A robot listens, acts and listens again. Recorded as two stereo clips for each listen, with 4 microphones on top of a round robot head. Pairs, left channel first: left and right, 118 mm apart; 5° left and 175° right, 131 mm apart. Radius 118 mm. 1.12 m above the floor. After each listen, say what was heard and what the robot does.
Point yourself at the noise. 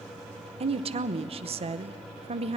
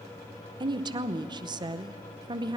The woman speaking: 120° right. Turn 120° right.
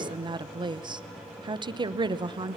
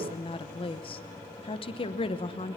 The woman speaking is now 40° right. Turn 40° right.
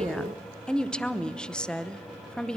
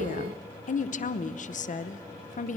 Facing the woman speaking, under 1 m away.